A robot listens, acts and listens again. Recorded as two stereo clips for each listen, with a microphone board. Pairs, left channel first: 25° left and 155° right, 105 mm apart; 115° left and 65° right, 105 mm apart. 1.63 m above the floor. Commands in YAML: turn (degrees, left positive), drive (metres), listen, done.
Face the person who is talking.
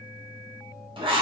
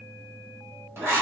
listen: true
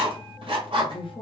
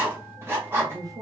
turn: -15
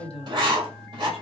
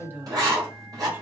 done: "Found it: a woman speaking, straight ahead."